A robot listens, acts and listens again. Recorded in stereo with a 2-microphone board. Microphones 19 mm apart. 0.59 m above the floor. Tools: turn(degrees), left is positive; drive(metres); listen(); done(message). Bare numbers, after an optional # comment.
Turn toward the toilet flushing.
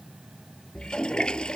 # The toilet flushing: about 60° left or 120° left.
turn(60)
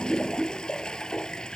# So it is at 60° left.
turn(60)
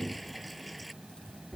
done("Found it: a toilet flushing, straight ahead.")